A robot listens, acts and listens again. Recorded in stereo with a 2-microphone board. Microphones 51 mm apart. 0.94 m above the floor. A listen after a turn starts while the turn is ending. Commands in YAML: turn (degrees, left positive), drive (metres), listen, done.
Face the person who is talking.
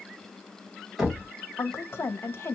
turn: 50
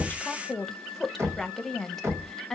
done: "Facing the woman speaking, under 1 m away."